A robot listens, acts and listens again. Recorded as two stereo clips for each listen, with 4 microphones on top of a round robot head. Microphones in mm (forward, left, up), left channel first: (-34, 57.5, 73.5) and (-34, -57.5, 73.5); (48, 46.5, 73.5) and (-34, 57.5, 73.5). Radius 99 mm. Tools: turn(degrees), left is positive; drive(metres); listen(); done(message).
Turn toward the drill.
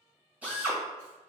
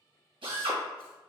turn(degrees=-165)
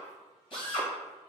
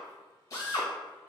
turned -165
turn(degrees=40)
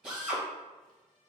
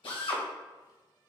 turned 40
done("Facing the drill.")